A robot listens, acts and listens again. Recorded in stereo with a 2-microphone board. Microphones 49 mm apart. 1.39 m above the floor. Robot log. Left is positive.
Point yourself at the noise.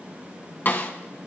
note: The snare drum: about 45° left or 135° left.
cmd yaw +45
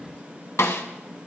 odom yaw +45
note: So it is at 90° left.
cmd yaw +90
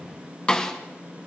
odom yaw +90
note: The snare drum is now 20° left.
cmd yaw +20
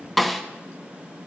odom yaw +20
end: Found it: a snare drum, straight ahead.